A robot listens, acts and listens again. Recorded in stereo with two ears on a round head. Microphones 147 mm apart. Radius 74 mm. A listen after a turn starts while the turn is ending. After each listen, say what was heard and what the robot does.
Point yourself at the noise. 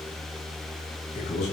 The man speaking: about 50° left or 130° left. Turn 50° left.
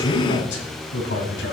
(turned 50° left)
So it is at 80° left. Turn 80° left.
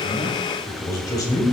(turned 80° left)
The man speaking is now 20° left. Turn 20° left.
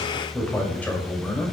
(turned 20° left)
The man speaking is now 10° left. Turn 10° left.
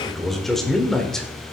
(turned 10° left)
Found it: a man speaking, straight ahead, 1 to 2 m away.